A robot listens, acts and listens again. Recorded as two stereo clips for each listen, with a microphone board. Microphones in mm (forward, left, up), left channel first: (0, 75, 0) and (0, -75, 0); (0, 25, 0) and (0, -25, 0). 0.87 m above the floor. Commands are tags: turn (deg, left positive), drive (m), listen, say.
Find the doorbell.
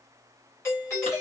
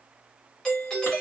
<turn deg="20"/>
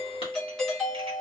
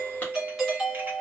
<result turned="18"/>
<say>Facing the doorbell.</say>